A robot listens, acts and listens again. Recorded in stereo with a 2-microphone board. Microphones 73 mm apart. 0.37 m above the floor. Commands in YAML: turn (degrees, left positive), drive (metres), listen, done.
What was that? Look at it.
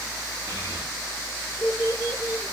turn: 60
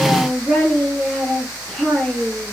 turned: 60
done: "Facing the child speaking, over 4 m away."